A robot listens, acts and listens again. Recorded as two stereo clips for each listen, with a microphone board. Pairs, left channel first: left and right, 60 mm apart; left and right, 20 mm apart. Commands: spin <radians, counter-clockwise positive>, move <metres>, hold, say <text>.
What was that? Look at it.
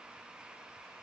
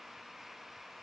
hold
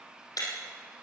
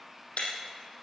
spin 1.57
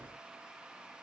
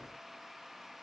say I heard breaking glass from this way, but can't make it out now.